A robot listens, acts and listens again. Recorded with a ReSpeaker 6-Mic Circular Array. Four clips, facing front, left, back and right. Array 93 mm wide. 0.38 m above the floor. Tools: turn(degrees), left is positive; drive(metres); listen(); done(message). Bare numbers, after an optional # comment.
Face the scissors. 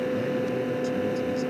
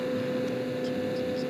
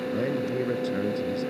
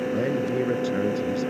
listen()
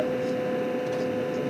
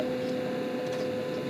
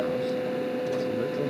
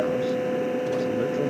listen()
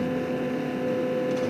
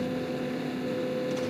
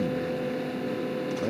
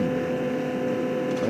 done("I can't make out scissors to turn to.")